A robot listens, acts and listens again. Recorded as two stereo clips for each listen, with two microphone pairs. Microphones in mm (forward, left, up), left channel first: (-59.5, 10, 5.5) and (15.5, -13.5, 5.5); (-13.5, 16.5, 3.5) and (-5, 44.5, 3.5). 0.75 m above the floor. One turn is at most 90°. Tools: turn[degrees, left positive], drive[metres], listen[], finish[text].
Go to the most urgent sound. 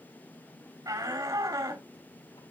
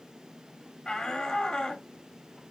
Thought: The shout: 35° right.
Action: turn[-35]
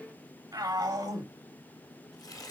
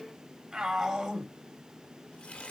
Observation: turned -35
Thought: The shout is now 15° left.
Action: turn[15]
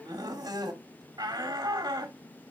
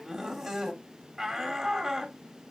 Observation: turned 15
Thought: The shout is now 10° left.
Action: turn[10]
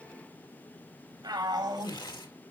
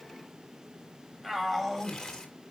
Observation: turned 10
Action: drive[1.0]
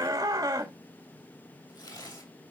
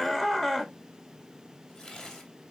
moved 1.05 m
Action: drive[1.0]
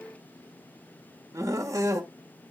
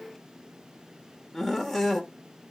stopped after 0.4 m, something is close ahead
Thought: The shout is now 10° right.
Action: turn[-10]
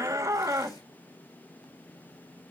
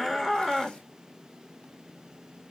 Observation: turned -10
Action: finish[Arrived at the shout, straight ahead.]